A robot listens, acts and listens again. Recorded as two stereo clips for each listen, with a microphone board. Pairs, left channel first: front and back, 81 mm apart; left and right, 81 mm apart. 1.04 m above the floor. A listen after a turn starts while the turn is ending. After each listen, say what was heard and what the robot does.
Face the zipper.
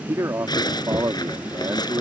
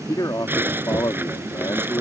The zipper: 25° right. Turn 25° right.
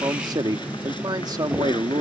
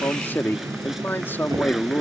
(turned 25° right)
Keep listening.
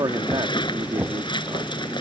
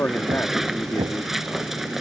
Found it: a zipper, straight ahead.